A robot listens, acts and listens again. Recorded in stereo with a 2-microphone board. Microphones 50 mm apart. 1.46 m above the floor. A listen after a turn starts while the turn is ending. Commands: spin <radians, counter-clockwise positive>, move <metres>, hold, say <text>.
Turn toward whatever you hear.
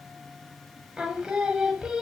spin -0.52
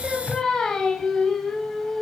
spin 0.26
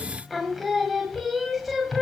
say Found it: singing, straight ahead, 1 to 2 m away.